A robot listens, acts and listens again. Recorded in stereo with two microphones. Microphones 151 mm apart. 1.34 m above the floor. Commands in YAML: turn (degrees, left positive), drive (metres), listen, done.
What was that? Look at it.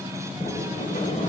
turn: 60
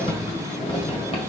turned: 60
turn: 45
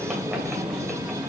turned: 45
done: "Facing the sliding door, 1 to 2 m away."